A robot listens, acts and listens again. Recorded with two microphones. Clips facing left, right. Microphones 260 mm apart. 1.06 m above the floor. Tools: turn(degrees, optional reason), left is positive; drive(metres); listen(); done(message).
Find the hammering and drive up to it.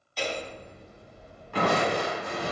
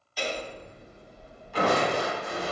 turn(degrees=-30)
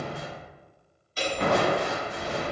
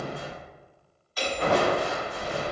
turn(degrees=30, reason="So it is at 30° left.")
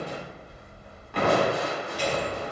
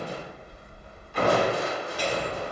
drive(metres=1.0)
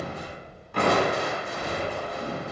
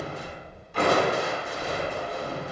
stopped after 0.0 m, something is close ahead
done("Something is in my way. I am facing the hammering but have not reached it.")